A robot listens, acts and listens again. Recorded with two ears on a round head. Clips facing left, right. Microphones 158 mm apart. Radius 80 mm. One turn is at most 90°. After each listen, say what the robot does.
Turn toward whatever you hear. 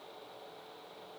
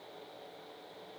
Keep listening.
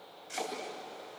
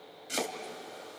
Turn 65° right.
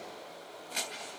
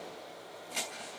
Facing the chopping, 2 to 4 m away.